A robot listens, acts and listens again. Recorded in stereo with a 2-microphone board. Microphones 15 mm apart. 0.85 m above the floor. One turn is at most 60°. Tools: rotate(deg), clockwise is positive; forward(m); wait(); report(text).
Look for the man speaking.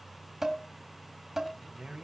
rotate(60)
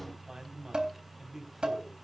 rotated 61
rotate(30)
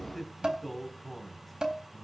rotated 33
rotate(-15)
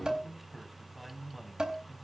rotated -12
report("Found it: a man speaking, straight ahead.")